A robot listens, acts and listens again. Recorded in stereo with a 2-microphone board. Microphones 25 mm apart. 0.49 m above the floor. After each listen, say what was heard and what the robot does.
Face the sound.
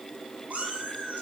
The cat meowing: about 75° right or 105° right. Turn 75° right.
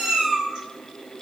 So it is at 40° right. Turn 40° right.
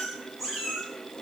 The cat meowing is now 15° right. Turn 15° right.
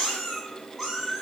The cat meowing is now 10° right. Turn 10° right.
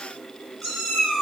Found it: a cat meowing, straight ahead.